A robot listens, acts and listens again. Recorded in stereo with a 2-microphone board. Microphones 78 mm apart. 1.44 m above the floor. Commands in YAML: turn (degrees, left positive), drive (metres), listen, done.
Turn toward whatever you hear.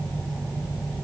listen: true
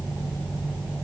listen: true
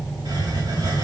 turn: -75
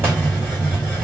turn: -30
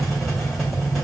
done: "Found it: a hiss, straight ahead, 2 to 4 m away."